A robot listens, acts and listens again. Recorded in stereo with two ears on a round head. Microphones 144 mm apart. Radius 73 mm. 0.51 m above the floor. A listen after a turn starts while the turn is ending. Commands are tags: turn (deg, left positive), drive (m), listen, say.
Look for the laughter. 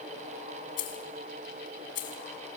<listen/>
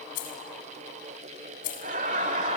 <turn deg="-45"/>
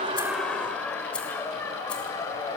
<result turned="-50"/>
<turn deg="20"/>
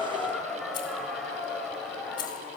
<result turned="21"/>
<say>Facing the laughter, 2 to 4 m away.</say>